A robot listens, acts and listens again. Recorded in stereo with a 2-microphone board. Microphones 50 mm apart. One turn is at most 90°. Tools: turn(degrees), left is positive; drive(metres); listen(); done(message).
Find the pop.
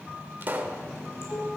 turn(degrees=-40)
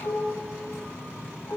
listen()
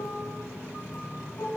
done("I heard a pop, but can't make it out now. It was about straight ahead or 100° right.")